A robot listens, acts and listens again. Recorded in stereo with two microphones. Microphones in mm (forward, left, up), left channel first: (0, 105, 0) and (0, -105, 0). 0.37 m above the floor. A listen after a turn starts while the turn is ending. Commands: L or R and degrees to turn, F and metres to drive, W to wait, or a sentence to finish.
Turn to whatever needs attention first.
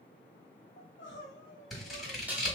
L60
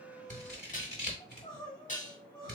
L30
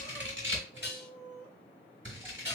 Found it: crying, straight ahead.